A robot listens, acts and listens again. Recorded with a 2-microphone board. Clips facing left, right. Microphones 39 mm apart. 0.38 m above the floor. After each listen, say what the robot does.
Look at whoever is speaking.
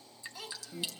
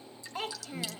Turn 45° right.
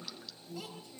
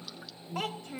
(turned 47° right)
Turn 80° right.
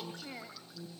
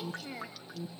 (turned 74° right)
Facing the child speaking.